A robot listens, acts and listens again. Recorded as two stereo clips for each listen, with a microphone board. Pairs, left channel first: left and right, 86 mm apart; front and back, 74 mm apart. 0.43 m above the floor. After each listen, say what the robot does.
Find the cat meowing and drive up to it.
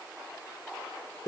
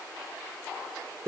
Keep listening.
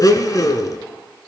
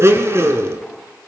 Keep listening.
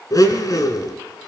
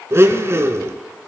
I can't make out a cat meowing to turn to.